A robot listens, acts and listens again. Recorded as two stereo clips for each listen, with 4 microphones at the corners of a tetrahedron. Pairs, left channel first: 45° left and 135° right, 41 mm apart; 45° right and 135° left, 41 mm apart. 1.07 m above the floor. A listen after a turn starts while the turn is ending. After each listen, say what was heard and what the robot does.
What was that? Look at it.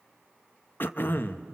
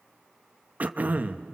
The throat clearing: 80° left. Turn 80° left.
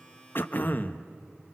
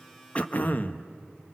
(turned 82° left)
Facing the throat clearing.